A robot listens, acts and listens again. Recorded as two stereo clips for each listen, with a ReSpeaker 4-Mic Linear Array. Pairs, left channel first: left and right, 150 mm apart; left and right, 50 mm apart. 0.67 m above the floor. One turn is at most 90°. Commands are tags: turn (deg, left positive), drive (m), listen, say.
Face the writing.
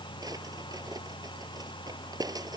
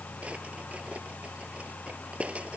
<listen/>
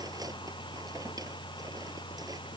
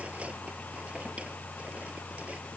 <listen/>
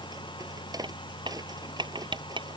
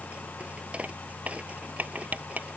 <turn deg="-30"/>
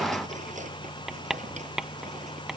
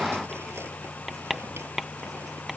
<say>Facing the writing.</say>